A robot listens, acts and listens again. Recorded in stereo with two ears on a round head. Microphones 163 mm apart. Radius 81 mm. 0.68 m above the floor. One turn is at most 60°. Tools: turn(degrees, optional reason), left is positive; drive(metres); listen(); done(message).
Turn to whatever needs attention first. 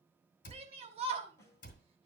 turn(degrees=-35, reason="The shout: about 35° right or 145° right.")
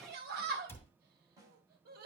turn(degrees=-60, reason="So it is at 105° right.")
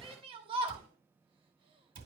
turn(degrees=-35, reason="The shout is now 35° right.")
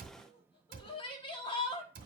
turn(degrees=35, reason="The shout is now 35° left.")
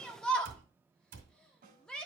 done("Facing the shout, 1 to 2 m away.")